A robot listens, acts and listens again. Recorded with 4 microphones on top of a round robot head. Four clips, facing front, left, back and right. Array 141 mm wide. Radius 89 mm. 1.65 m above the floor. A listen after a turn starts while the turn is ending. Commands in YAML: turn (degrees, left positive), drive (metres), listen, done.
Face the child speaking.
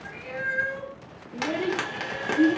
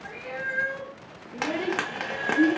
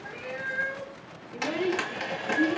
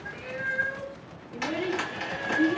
turn: 65
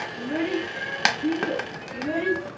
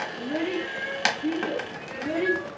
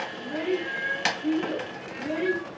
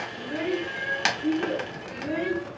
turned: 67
turn: 20
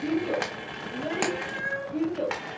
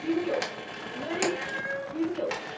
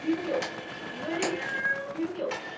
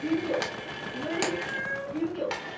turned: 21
turn: 20
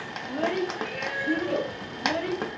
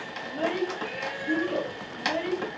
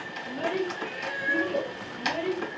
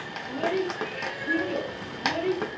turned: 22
done: "Found it: a child speaking, straight ahead."